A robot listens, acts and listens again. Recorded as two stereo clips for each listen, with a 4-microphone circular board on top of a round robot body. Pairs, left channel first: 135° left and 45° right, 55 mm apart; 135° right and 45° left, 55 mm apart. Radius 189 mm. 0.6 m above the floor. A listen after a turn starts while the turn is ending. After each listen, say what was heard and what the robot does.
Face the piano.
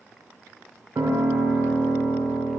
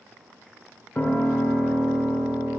The piano: 75° right. Turn 75° right.
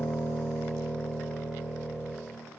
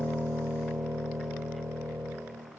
The piano is now 10° left. Turn 10° left.
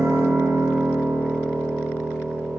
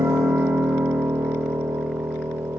Facing the piano, under 1 m away.